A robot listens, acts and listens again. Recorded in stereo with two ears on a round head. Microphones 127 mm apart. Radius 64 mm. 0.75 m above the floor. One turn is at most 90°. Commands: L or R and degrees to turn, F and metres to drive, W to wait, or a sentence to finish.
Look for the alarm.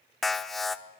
L30
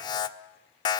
L90
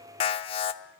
L40
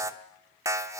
R20
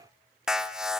Facing the alarm, 1 to 2 m away.